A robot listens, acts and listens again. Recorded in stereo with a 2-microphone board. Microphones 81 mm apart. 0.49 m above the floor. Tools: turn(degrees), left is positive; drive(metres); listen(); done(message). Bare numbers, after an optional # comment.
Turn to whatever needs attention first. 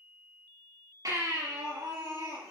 # The baby crying: about 45° right or 135° right.
turn(-45)
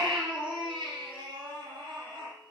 # So it is at 90° right.
turn(-90)
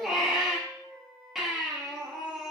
done("Found it: a baby crying, straight ahead.")